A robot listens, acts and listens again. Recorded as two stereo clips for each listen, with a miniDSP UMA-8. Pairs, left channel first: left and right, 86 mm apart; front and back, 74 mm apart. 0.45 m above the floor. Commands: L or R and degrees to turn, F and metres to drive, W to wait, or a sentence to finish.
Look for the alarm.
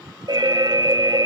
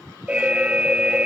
R110
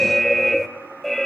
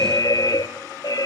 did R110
Found it: an alarm, straight ahead, under 1 m away.